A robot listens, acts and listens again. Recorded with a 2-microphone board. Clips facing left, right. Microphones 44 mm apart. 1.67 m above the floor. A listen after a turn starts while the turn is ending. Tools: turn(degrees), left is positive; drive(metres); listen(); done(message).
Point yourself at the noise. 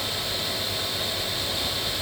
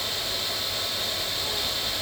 listen()
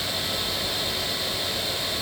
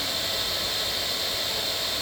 listen()
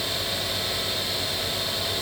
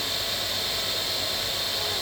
done("I can't make out anything.")